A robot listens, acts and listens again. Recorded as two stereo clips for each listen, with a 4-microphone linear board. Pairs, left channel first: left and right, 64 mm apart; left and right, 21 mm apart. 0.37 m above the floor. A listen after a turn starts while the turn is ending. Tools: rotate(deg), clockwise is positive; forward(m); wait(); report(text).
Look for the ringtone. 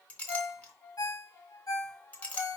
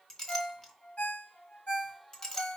rotate(-70)
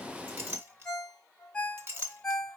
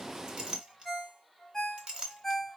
rotate(-15)
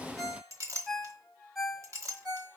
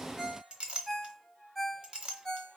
report("Found it: a ringtone, straight ahead, 1 to 2 m away.")